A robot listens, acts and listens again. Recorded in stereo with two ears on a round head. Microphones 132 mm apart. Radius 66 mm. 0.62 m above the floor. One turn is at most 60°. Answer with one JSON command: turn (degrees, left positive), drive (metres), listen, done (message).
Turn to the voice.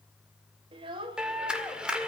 {"turn": -35}
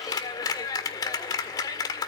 {"listen": true}
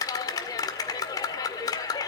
{"listen": true}
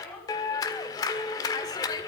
{"turn": 10}
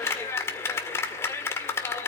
{"listen": true}
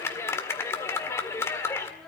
{"listen": true}
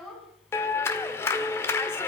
{"done": "Found it: a child speaking, straight ahead, over 4 m away."}